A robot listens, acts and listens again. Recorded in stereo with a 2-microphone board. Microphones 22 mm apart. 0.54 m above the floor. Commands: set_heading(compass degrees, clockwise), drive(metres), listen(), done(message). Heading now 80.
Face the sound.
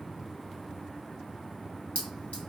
set_heading(10)
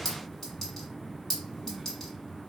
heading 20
set_heading(0)
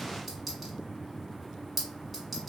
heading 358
done("Found it: a clink, straight ahead, 1 to 2 m away.")